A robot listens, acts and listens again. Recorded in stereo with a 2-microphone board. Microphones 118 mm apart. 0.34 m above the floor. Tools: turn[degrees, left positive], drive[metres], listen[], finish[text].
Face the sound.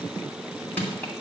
Action: turn[30]
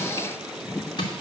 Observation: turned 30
Thought: So it is at 135° left.
Action: turn[135]
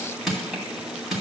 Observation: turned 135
Action: finish[Found it: crushing, straight ahead.]